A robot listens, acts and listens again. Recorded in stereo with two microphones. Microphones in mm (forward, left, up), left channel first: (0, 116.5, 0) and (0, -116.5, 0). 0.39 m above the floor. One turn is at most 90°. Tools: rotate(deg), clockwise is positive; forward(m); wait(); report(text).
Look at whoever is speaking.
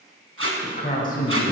rotate(-35)
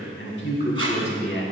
rotate(-90)
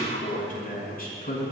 rotate(-40)
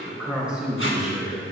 report("Found it: a man speaking, straight ahead.")